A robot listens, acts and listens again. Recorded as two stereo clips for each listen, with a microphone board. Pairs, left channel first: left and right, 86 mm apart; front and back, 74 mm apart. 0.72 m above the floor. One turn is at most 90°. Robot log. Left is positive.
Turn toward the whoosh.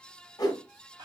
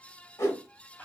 note: The whoosh: 50° left.
cmd yaw +50
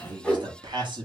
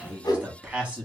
note: The whoosh is now 10° left.
cmd yaw +10
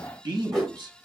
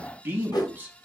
end: Facing the whoosh.